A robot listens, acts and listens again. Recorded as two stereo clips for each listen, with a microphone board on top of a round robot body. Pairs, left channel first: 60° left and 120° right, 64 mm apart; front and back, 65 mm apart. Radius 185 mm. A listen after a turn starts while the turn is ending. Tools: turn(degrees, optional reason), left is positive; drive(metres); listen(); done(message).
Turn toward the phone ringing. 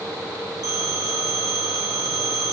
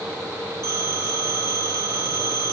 turn(degrees=-135, reason="The phone ringing: 135° right.")
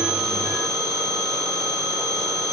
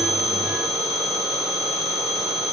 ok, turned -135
turn(degrees=15, reason="The phone ringing is now 15° left.")
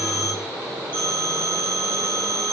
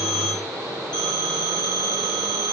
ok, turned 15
done("Facing the phone ringing.")